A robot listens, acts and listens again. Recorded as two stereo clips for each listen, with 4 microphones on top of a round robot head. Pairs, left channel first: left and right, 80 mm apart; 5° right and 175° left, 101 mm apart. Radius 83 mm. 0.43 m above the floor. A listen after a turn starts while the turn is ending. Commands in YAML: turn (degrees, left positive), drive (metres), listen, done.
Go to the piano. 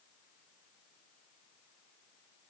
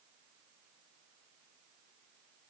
listen: true
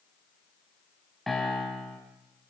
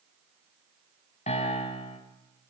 drive: 1.0
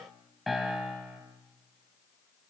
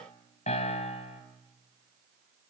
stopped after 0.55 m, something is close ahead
done: "Something is in my way. I am facing the piano but have not reached it."